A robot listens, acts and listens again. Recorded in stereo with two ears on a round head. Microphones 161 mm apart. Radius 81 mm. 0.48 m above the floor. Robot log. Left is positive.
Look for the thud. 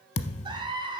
note: The thud: about 40° left or 140° left.
cmd yaw +40
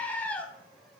cmd idle
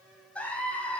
end: I heard a thud, but can't make it out now. It was about straight ahead or 100° left.